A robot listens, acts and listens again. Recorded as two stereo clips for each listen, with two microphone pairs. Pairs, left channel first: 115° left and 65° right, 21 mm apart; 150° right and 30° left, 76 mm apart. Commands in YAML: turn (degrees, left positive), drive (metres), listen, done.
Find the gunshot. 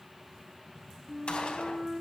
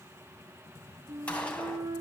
turn: 140
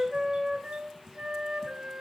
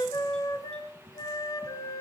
done: "Facing where the gunshot came from. I can't hear it now."